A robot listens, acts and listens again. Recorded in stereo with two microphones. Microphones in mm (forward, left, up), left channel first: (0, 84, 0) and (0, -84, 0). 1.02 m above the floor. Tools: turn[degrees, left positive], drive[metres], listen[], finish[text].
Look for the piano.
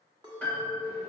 Action: turn[30]
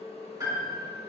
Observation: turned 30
Thought: So it is at 20° right.
Action: turn[-20]
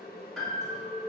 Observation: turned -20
Action: finish[Facing the piano, 1 to 2 m away.]